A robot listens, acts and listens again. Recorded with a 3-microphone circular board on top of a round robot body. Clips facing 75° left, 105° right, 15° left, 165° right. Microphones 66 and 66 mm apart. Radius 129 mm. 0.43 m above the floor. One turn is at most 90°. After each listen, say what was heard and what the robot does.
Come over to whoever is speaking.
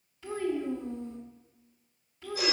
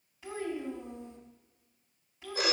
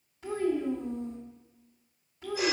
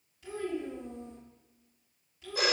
The child speaking: 35° right. Turn 35° right.
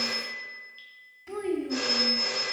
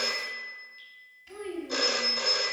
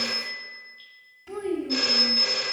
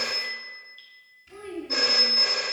The child speaking is now 10° left. Turn 10° left.
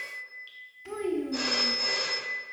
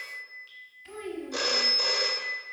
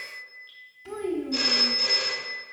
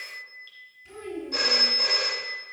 Drive 1.0 m forward.
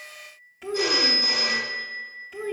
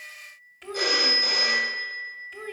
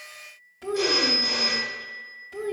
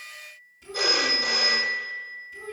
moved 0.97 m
The child speaking is now 10° right. Turn 10° right.
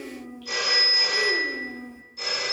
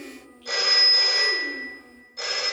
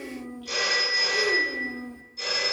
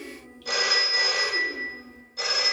Drive 1.0 m forward.
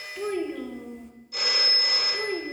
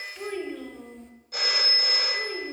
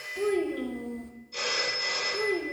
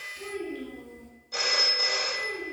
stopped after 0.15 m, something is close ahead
The child speaking is now 10° right. Turn 10° right.
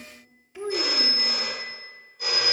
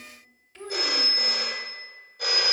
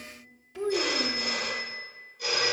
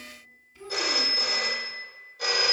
I am next to the child speaking.